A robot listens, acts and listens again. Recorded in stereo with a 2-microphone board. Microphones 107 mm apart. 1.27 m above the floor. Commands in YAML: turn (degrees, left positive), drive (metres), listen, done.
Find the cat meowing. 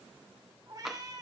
turn: -35
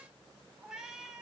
done: "Facing the cat meowing, 2 to 4 m away."